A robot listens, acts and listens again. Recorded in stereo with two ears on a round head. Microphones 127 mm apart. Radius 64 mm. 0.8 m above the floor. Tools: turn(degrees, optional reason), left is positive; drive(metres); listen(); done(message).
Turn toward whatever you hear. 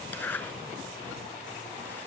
turn(degrees=30)
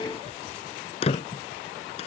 turn(degrees=135, reason="So it is at 135° left.")
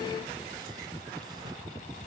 listen()
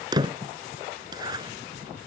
turn(degrees=-30, reason="The zipper is now 30° right.")
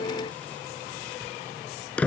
turn(degrees=10, reason="The zipper is now 10° left.")
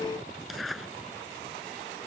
done("Facing the zipper.")